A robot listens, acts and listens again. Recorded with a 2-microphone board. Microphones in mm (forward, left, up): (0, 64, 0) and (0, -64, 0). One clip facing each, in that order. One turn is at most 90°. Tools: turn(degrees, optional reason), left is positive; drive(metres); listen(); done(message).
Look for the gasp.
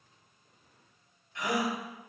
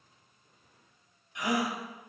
turn(degrees=-15, reason="The gasp: about 15° right or 165° right.")
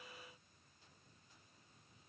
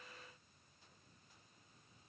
listen()
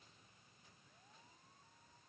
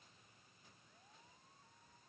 done("I heard a gasp, but can't make it out now. It was about straight ahead or 150° right.")